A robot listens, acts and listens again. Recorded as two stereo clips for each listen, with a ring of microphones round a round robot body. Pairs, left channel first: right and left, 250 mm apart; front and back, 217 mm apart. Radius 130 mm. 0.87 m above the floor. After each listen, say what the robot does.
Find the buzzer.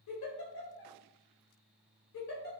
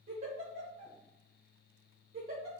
Keep listening.
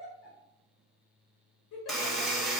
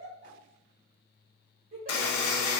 Facing the buzzer.